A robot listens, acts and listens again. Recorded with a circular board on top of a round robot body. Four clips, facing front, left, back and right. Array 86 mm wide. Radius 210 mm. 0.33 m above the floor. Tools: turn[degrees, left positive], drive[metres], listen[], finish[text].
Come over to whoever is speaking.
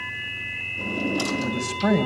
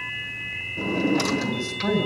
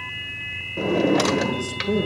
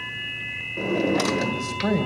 Thought: The man speaking: 15° right.
Action: turn[-15]
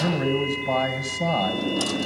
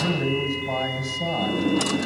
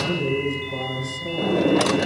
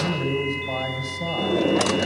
Action: drive[1.0]
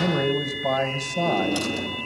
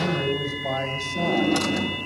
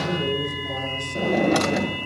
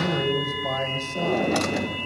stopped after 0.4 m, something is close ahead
Action: finish[Something is in my way. I am facing the man speaking but have not reached it.]